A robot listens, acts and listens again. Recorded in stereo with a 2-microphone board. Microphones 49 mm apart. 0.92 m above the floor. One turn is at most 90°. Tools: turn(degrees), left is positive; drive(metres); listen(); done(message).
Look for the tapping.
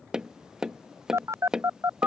turn(degrees=-30)
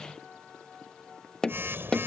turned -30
turn(degrees=15)
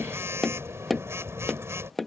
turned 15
done("Facing the tapping.")